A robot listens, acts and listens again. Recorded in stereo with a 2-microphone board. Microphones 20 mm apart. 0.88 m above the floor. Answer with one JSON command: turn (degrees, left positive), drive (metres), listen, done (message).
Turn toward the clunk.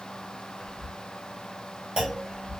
{"turn": -40}
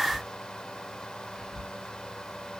{"listen": true}
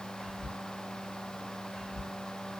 {"done": "I heard a clunk, but can't make it out now. It was about straight ahead or 100° right."}